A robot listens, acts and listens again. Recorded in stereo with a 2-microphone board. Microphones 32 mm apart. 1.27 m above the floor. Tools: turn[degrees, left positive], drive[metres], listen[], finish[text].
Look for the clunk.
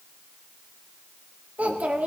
Action: listen[]
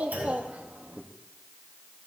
Action: turn[-90]
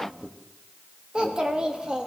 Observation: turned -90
Action: finish[I heard a clunk from this way, but can't make it out now.]